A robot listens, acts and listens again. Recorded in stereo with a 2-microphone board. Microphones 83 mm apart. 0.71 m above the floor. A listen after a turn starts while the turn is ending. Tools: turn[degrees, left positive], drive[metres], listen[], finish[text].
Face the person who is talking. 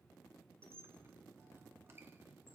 Action: listen[]
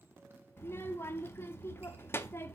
Thought: The child speaking: about 30° left or 150° left.
Action: turn[30]
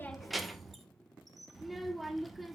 Action: finish[Found it: a child speaking, straight ahead, under 1 m away.]